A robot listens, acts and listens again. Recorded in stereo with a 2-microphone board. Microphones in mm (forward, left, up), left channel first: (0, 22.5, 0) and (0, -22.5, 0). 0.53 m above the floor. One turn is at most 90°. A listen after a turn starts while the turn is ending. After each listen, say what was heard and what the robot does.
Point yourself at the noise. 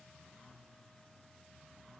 Keep listening.
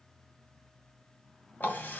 The running tap: about 45° left or 135° left. Turn 45° left.
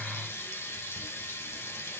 So it is at 90° left. Turn 90° left.
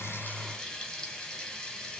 The running tap is now 20° left. Turn 20° left.
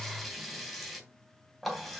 Found it: a running tap, straight ahead, 2 to 4 m away.